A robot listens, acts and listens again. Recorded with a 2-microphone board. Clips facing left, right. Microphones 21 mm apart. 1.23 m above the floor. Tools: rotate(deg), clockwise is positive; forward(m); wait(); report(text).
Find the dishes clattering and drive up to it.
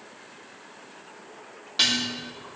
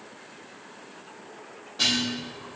rotate(-65)
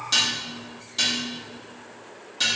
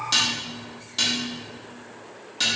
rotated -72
rotate(10)
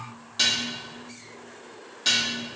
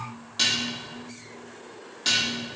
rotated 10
forward(1.0)
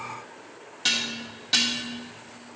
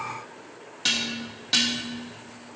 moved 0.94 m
forward(1.0)
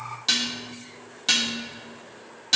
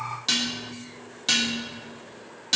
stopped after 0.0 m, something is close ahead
rotate(-10)
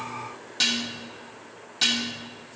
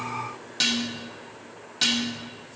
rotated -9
report("I am next to the dishes clattering.")